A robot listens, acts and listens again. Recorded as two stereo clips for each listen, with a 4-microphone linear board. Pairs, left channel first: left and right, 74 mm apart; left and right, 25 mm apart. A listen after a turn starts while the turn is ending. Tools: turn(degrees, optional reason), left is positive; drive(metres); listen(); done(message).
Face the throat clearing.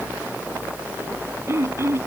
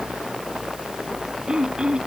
turn(degrees=-35, reason="The throat clearing: about 35° right or 145° right.")
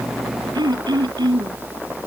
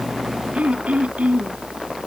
turn(degrees=-110, reason="So it is at 110° right.")
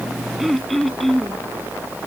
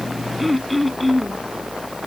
done("Found it: throat clearing, straight ahead.")